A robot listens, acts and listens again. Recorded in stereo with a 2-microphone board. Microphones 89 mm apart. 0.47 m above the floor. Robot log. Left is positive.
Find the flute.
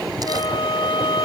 note: The flute: about 60° left or 120° left.
cmd yaw +60
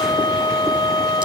note: So it is at 55° left.
cmd yaw +55
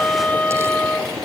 note: The flute is now 20° left.
cmd yaw +20
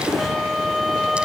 end: Found it: a flute, straight ahead.